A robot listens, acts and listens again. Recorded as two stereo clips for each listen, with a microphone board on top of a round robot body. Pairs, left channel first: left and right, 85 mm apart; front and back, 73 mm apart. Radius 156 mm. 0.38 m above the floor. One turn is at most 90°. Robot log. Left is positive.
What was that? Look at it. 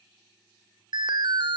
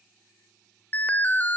note: The alarm: 65° right.
cmd yaw -65
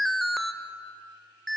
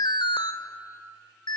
end: Found it: an alarm, straight ahead.